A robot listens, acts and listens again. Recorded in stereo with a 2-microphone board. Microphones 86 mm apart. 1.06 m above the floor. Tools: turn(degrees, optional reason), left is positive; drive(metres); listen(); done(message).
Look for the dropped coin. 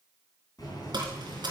turn(degrees=-60, reason="The dropped coin: about 60° right or 120° right.")
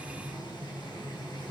listen()
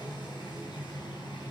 done("I heard a dropped coin, but can't make it out now. It was about straight ahead or 60° right.")